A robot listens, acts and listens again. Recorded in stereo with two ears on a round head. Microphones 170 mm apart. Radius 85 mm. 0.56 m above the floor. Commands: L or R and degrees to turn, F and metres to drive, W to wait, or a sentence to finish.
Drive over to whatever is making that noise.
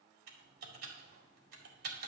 R55
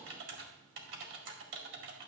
R70
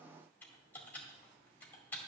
L10
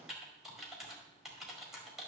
F1.0
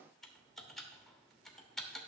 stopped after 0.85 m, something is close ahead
I am next to the typing on a keyboard.